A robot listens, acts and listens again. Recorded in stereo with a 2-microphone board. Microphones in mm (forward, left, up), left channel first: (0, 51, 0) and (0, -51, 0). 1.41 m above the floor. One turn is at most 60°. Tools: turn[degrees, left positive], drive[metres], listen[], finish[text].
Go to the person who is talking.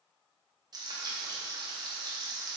Action: listen[]
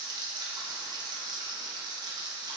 Action: listen[]
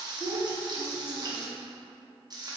Action: turn[60]
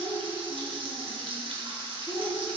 Thought: So it is at 40° left.
Action: turn[40]
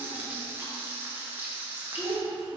Action: drive[1.0]
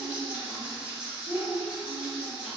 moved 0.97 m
Thought: The child speaking is now 10° right.
Action: turn[-10]
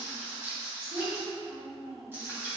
Action: drive[1.0]
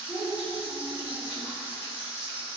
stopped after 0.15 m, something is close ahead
Action: finish[Arrived at the child speaking, straight ahead.]